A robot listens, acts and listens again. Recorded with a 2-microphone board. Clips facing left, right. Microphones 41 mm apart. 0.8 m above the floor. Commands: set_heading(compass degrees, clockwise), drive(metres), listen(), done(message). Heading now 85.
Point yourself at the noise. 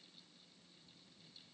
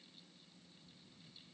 listen()
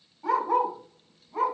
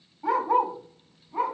set_heading(115)
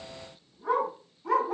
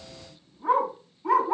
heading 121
set_heading(271)
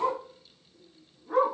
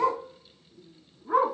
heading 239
set_heading(279)
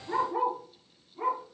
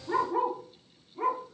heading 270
set_heading(280)
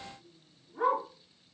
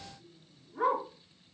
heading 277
done("Facing the dog barking.")